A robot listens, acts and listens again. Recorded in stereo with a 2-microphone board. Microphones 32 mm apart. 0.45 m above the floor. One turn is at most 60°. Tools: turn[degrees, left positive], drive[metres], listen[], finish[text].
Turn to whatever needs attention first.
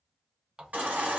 Thought: The baby crying: about 60° right or 120° right.
Action: turn[-60]
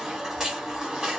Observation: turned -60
Thought: So it is at 15° right.
Action: turn[-15]
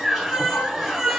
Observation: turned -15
Action: finish[Found it: a baby crying, straight ahead, 1 to 2 m away.]